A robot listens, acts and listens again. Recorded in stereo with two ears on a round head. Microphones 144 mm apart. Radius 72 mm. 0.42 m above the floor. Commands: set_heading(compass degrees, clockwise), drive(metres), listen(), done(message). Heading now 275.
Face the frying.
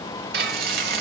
set_heading(340)
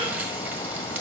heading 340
set_heading(355)
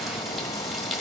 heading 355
done("Facing the frying.")